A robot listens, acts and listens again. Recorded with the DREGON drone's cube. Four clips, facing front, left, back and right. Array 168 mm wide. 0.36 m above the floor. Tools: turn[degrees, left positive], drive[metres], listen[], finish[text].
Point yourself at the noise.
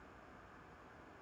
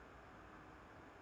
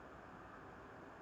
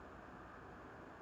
Action: listen[]
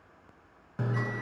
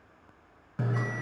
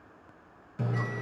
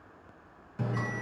Thought: The bell: 40° left.
Action: turn[40]
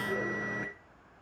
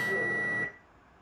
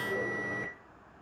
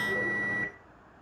Action: finish[Found it: a bell, straight ahead, 2 to 4 m away.]